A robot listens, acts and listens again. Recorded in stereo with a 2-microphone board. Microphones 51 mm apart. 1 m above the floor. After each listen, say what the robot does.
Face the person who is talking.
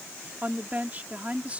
Turn 30° right.
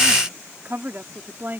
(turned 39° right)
Turn 135° right.
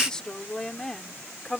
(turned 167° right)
Found it: a woman speaking, straight ahead.